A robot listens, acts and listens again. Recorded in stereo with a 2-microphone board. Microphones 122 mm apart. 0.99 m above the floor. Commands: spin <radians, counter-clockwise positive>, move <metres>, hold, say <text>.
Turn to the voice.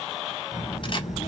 spin 1.57
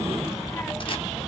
say Found it: a child speaking, straight ahead, 1 to 2 m away.